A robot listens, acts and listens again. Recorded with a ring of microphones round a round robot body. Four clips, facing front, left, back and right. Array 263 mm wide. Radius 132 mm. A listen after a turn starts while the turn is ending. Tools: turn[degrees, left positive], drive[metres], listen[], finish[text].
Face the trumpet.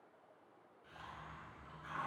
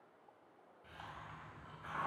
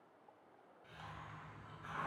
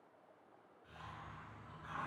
Action: listen[]
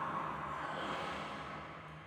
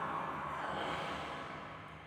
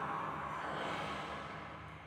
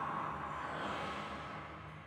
Action: listen[]
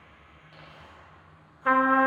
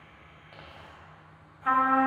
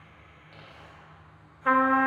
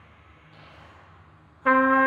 Thought: The trumpet: 90° right.
Action: turn[-90]
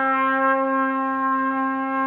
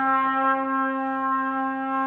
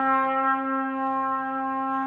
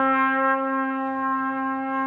Action: finish[Facing the trumpet, under 1 m away.]